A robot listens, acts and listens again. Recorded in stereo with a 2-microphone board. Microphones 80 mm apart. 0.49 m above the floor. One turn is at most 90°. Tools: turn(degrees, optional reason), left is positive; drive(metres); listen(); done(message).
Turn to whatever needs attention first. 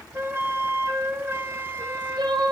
turn(degrees=-60, reason="The crying: about 60° right or 120° right.")
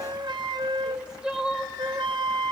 turn(degrees=-10, reason="So it is at 10° right.")
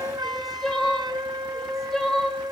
done("Found it: crying, straight ahead.")